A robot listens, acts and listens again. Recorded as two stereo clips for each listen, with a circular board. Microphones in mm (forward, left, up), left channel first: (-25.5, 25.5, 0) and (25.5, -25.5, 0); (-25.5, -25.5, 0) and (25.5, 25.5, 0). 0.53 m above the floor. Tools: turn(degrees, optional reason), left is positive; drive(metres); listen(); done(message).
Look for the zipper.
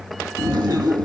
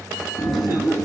turn(degrees=-50, reason="The zipper: 50° right.")
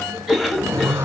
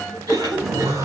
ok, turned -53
done("Facing the zipper, over 4 m away.")